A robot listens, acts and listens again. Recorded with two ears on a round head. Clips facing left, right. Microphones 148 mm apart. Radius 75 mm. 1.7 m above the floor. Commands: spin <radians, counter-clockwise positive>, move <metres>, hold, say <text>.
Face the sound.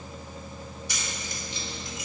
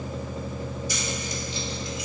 spin 0.70
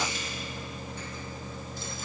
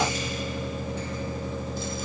hold
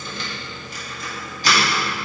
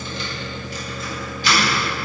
spin 0.61
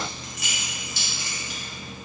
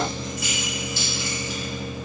spin 2.09
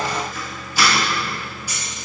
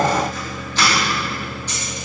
spin 0.17
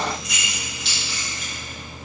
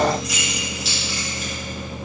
say Facing the keys jangling.